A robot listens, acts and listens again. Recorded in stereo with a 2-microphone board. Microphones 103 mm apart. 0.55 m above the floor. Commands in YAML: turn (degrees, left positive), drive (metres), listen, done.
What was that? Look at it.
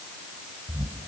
turn: -55
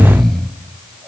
done: "Found it: snoring, straight ahead."